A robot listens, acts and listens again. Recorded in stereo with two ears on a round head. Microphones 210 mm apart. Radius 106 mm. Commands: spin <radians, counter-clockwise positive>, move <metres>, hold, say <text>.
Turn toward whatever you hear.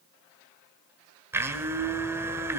spin -0.52
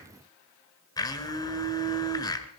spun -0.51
spin 0.26
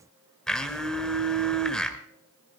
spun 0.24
say Found it: a blender, straight ahead.